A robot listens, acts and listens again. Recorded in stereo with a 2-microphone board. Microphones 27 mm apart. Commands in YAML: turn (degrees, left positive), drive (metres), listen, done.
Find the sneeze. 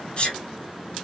turn: 40
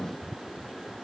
listen: true
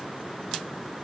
done: "I heard a sneeze, but can't make it out now. It was about straight ahead or 100° left."